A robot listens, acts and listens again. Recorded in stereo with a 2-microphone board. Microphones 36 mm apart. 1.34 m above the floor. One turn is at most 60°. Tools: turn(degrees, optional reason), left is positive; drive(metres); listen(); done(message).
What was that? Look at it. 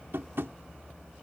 turn(degrees=-60)
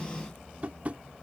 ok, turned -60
turn(degrees=-40, reason="So it is at 40° right.")
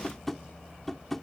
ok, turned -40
turn(degrees=10, reason="The tapping is now 10° left.")
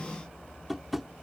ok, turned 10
done("Facing the tapping.")